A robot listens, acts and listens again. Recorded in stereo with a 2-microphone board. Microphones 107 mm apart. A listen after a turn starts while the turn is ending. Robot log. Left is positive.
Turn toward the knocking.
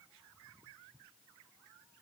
cmd idle
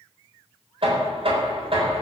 note: The knocking: about 60° right or 120° right.
cmd yaw -60
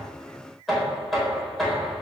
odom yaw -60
end: Found it: knocking, straight ahead, over 4 m away.